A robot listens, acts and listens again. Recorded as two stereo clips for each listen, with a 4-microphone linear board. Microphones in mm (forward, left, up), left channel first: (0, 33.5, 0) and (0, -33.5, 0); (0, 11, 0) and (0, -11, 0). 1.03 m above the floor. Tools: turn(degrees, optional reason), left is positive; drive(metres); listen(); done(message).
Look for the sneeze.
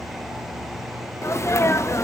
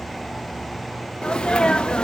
turn(degrees=45, reason="The sneeze: about 45° left or 135° left.")
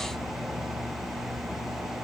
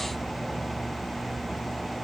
listen()
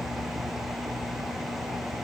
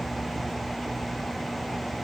done("I heard a sneeze, but can't make it out now. It was about straight ahead or 90° left.")